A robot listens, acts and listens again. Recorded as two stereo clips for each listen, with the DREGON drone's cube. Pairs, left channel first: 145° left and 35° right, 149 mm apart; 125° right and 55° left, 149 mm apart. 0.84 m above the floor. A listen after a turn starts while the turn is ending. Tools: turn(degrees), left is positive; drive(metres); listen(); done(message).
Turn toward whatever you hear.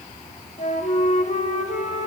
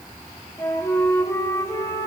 turn(degrees=170)
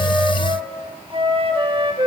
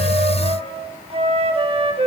turn(degrees=15)
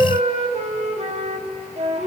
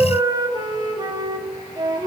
done("Facing the flute, 1 to 2 m away.")